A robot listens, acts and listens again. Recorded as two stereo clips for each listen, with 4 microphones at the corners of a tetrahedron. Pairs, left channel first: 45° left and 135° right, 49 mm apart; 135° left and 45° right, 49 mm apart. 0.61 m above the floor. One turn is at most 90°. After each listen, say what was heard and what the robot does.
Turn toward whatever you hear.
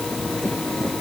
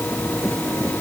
Keep listening.
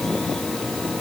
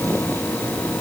Keep listening.
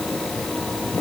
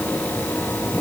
I can't make out anything.